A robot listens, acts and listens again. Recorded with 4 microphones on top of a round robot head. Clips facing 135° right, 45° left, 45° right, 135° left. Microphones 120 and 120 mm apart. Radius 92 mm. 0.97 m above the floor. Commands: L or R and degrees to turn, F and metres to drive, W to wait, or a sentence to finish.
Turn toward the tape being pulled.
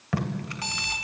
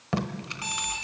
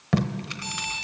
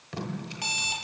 R20
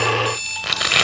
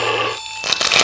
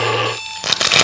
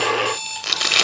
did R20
Found it: tape being pulled, straight ahead, 1 to 2 m away.